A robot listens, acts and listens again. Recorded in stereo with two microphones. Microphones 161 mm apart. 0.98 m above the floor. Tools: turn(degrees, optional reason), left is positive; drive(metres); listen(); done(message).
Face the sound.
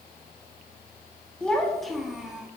turn(degrees=-30)
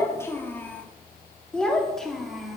turn(degrees=30)
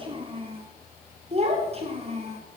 turn(degrees=-40, reason="So it is at 40° right.")
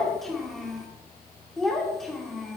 done("Facing the child speaking.")